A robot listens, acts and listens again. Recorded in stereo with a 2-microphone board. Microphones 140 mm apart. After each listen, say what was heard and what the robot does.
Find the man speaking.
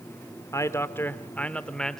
Turn 30° left.
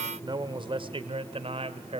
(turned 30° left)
So it is at 45° right. Turn 45° right.
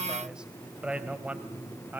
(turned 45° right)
The man speaking is now 10° right. Turn 10° right.
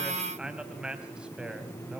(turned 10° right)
Facing the man speaking.